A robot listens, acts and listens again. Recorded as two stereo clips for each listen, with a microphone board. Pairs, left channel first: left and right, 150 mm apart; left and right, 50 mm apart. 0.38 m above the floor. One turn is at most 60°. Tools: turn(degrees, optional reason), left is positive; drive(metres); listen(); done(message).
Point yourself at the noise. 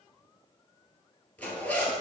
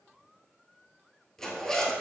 turn(degrees=30)
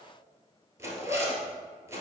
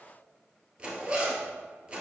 turn(degrees=-20, reason="So it is at 20° right.")
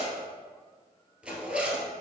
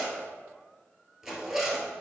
done("Facing the zipper.")